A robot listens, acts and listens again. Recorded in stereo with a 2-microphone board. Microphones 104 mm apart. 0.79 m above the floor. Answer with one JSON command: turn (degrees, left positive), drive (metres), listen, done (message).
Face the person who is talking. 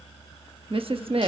{"turn": -60}
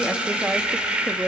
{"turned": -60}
{"turn": -20}
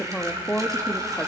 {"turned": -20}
{"done": "Facing the woman speaking, 1 to 2 m away."}